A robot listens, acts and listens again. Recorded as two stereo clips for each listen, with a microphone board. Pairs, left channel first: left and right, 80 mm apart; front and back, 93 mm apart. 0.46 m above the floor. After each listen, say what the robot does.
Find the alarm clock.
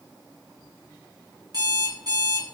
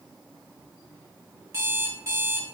Turn 120° right.
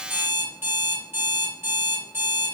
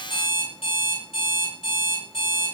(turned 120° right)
Turn 25° right.
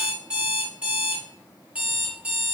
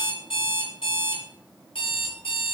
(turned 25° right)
Turn 15° right.
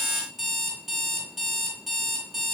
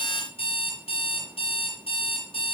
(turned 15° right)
Facing the alarm clock, 2 to 4 m away.